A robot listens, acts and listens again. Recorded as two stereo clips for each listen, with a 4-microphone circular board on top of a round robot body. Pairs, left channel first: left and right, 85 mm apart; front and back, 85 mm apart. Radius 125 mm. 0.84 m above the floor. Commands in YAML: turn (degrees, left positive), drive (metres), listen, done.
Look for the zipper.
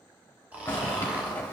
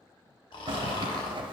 turn: 155
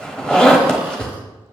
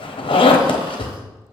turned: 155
turn: 10
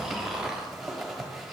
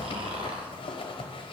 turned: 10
done: "Found it: a zipper, straight ahead."